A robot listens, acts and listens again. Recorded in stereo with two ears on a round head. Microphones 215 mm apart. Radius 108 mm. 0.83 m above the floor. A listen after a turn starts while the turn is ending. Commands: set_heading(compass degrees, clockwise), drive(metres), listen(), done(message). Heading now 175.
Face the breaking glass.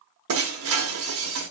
set_heading(240)
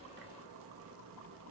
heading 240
listen()
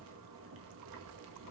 done("I heard breaking glass, but can't make it out now. It was about straight ahead or 50° right.")